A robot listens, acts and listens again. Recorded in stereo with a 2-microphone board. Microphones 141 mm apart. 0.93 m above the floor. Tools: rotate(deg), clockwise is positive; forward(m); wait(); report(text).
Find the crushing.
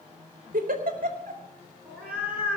wait()
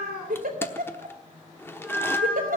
rotate(-15)
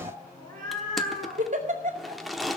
report("Facing the crushing, 1 to 2 m away.")